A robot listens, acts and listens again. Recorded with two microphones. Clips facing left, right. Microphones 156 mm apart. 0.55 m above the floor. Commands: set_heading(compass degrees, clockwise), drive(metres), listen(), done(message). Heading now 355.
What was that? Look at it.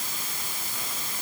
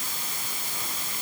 listen()
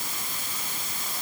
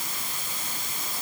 listen()
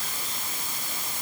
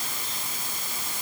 done("I can't make out anything to turn to.")